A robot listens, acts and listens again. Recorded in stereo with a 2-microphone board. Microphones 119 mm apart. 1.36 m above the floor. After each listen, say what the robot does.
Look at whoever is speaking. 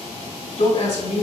Turn 90° left.
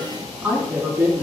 Turn 10° right.
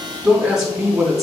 Facing the woman speaking.